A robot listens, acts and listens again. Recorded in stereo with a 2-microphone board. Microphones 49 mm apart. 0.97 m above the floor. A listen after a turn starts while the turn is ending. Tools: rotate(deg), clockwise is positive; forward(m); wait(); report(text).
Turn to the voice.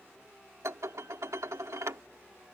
wait()
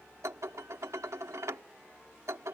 wait()
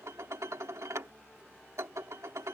report("I can't make out anyone speaking to turn to.")